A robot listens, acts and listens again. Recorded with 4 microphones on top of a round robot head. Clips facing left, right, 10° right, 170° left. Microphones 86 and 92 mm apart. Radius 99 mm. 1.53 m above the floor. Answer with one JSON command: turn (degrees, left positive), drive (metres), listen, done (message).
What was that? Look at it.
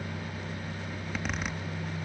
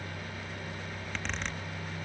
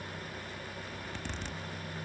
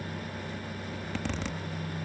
{"turn": 170}
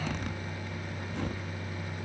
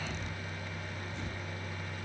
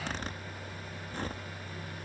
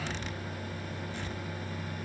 {"turn": 45}
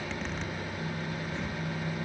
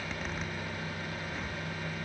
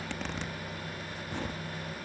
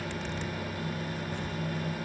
{"done": "Facing the zipper."}